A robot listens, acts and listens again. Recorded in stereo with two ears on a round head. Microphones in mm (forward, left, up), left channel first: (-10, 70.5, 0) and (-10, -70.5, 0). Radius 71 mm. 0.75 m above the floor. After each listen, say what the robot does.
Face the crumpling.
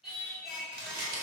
Turn 70° right.
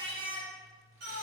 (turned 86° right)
Keep listening.
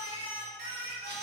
Keep listening.
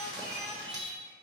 Turn 20° right.
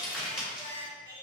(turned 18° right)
Facing the crumpling, 1 to 2 m away.